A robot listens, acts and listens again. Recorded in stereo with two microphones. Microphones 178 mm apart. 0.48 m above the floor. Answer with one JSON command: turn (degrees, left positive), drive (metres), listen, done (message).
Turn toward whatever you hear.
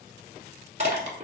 {"turn": -45}
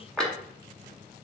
{"done": "Found it: crushing, straight ahead."}